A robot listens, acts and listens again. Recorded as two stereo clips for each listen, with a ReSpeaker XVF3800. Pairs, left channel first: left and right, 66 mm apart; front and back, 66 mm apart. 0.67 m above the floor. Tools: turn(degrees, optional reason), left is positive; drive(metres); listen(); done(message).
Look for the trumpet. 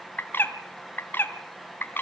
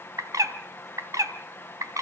listen()
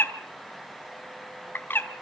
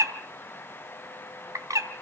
listen()
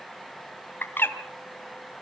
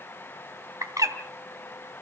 done("I can't make out a trumpet to turn to.")